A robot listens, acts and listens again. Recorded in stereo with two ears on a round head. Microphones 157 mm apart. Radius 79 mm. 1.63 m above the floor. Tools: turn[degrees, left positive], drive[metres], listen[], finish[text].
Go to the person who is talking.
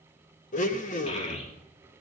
Thought: The child speaking: about 40° left or 140° left.
Action: turn[40]
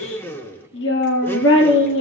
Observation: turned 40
Thought: So it is at 100° left.
Action: turn[100]
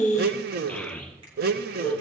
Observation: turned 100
Action: drive[1.0]
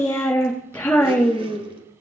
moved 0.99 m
Thought: The child speaking is now 10° left.
Action: turn[10]
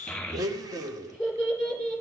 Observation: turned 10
Action: drive[1.0]
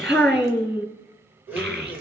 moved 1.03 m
Action: drive[1.0]
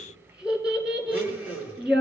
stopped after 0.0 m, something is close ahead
Action: finish[I am next to the child speaking.]